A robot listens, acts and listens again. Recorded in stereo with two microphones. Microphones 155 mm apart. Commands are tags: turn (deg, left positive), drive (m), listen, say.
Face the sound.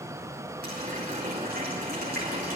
<turn deg="-90"/>
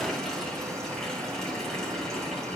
<say>Facing the running tap.</say>